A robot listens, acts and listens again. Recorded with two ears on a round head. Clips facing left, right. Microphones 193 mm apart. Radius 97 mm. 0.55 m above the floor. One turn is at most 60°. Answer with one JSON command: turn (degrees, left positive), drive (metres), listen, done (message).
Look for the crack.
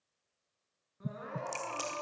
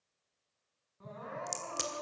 {"turn": -30}
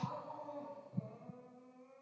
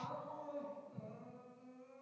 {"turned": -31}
{"listen": true}
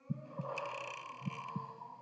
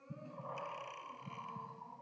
{"done": "I heard a crack, but can't make it out now. It was about straight ahead or 120° right."}